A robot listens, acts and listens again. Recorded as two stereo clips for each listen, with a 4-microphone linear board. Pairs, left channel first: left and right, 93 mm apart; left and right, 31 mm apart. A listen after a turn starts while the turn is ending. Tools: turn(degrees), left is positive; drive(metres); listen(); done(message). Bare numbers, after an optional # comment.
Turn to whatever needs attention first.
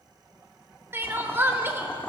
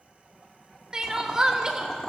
# The crying: about 25° right or 155° right.
turn(-25)
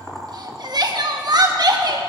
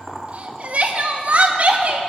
# So it is at 130° right.
turn(-130)
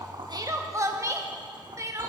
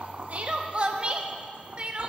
# The crying is now 35° right.
turn(-35)
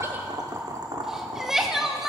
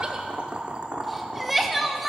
done("Facing the crying.")